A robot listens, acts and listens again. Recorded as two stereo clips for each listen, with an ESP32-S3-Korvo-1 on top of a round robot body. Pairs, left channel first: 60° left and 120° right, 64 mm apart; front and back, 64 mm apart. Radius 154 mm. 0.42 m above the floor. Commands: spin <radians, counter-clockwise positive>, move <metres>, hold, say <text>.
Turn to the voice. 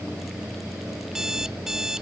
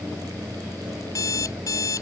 hold
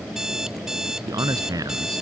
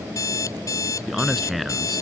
spin -1.57
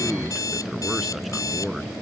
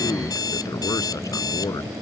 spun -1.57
spin -0.52
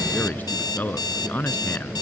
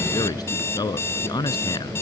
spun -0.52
say Facing the man speaking.